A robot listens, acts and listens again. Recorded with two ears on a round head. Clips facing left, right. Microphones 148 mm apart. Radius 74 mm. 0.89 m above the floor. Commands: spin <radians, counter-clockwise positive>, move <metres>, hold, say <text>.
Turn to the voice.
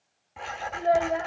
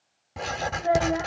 spin 0.70
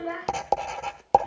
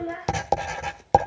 spin 1.75
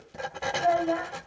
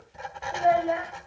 spin -0.35
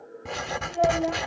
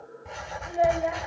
hold
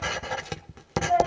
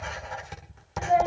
spin -0.17
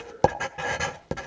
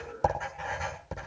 hold
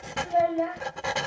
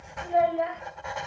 say Facing the child speaking, 2 to 4 m away.